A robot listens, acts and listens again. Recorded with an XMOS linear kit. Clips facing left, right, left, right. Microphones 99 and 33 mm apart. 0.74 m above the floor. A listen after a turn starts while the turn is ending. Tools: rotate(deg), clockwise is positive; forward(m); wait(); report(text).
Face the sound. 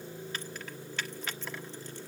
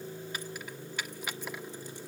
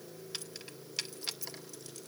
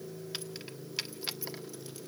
rotate(30)
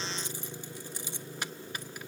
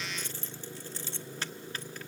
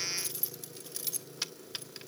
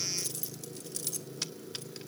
rotate(-15)
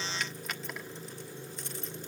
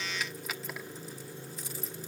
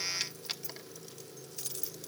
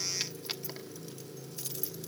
report("Facing the keys jangling, 1 to 2 m away.")